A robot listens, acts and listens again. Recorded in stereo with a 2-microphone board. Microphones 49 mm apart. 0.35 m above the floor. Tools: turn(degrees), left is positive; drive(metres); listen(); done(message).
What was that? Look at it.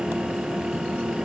listen()
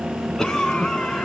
turn(degrees=30)
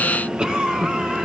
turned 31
turn(degrees=-20)
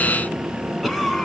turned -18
done("Facing the cough, 2 to 4 m away.")